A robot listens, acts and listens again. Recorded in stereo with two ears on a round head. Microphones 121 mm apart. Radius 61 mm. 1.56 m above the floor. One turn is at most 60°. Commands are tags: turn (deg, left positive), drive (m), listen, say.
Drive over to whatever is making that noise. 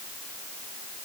<listen/>
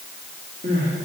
<turn deg="-50"/>
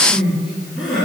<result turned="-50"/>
<drive m="1.0"/>
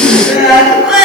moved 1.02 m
<drive m="1.0"/>
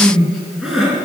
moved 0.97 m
<drive m="1.0"/>
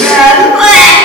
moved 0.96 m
<drive m="1.0"/>
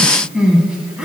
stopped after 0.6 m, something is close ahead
<turn deg="-10"/>
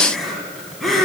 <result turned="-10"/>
<say>I am next to the crying.</say>